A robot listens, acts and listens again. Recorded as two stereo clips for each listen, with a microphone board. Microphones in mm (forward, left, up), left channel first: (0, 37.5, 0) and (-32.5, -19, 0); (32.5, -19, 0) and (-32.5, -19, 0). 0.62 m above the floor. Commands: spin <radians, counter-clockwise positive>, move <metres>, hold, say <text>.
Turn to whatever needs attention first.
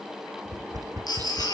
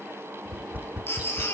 spin 0.96
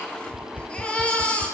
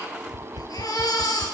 spin -0.17
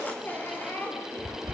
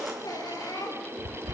say Found it: a baby crying, straight ahead, over 4 m away.